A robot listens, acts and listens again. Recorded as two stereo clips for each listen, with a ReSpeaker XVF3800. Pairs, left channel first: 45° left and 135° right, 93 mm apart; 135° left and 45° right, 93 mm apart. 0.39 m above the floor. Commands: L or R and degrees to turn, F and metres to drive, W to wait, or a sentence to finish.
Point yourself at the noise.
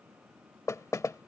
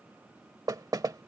Found it: knocking, straight ahead.